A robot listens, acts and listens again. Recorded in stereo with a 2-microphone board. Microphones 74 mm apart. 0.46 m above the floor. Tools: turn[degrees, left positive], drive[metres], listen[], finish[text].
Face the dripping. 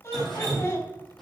Action: turn[30]
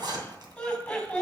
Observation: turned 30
Action: listen[]
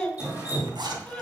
Thought: So it is at 25° right.
Action: turn[-25]
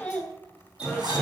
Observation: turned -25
Thought: The dripping is now 20° right.
Action: turn[-20]
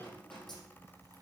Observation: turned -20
Action: listen[]
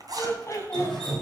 Action: finish[Facing the dripping, over 4 m away.]